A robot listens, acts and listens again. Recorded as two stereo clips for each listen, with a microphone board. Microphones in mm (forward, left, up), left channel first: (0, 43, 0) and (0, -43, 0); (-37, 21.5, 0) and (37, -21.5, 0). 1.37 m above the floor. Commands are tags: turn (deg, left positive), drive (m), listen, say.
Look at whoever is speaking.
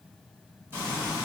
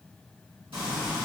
<listen/>
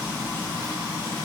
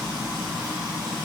<listen/>
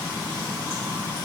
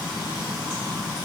<say>I can't make out anyone speaking to turn to.</say>